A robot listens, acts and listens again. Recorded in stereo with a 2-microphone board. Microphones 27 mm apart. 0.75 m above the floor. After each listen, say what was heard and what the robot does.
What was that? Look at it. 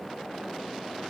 Keep listening.
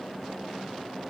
Keep listening.
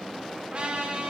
The trumpet: about 45° right or 135° right. Turn 45° right.
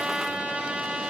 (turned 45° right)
So it is at 95° right. Turn 95° right.
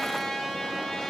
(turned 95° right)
Facing the trumpet, 1 to 2 m away.